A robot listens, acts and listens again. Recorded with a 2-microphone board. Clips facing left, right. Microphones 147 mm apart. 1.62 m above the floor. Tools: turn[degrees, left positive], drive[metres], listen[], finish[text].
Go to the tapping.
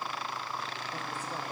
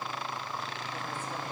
Action: listen[]
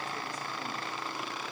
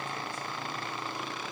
Action: listen[]
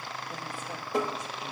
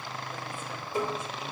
Thought: The tapping: about 70° left or 110° left.
Action: turn[70]
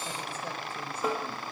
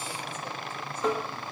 Thought: So it is at 10° left.
Action: turn[10]
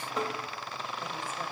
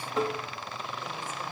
Action: drive[1.0]
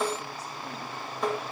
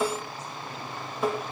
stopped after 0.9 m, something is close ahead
Action: finish[I am next to the tapping.]